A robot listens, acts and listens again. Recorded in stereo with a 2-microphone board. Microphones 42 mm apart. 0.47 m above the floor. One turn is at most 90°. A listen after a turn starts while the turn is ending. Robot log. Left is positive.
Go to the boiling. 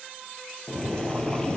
note: The boiling: about 15° left or 165° left.
cmd yaw +15
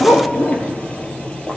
note: So it is at 150° left.
cmd yaw +90
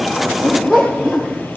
note: The boiling is now 55° left.
cmd yaw +55
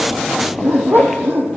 cmd idle
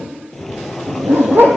cmd fwd 1.0
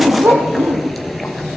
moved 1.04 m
cmd fwd 1.0
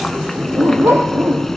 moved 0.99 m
note: The boiling is now 10° left.
cmd yaw +10
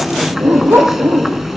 cmd fwd 1.0
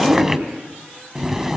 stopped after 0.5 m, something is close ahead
note: The boiling is now 10° right.
cmd yaw -10
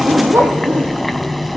end: I am next to the boiling.